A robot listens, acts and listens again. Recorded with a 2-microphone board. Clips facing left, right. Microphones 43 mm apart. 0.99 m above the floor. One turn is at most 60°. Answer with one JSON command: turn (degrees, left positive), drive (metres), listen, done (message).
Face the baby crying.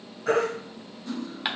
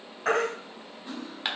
{"turn": -60}
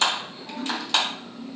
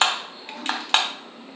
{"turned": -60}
{"listen": true}
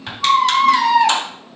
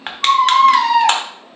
{"done": "Found it: a baby crying, straight ahead, 2 to 4 m away."}